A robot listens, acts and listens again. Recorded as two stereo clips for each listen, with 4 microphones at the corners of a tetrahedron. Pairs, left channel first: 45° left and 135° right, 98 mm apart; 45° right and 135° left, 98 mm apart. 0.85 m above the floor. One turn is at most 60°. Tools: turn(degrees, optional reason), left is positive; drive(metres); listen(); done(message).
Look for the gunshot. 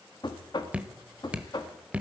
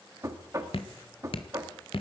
listen()
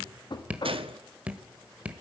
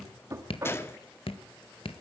turn(degrees=-60, reason="The gunshot: 110° right.")
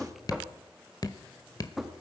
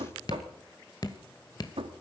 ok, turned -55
turn(degrees=-55, reason="Nothing new. It was at 55° right.")
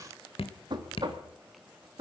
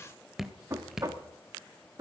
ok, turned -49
done("I heard a gunshot from this way, but can't make it out now.")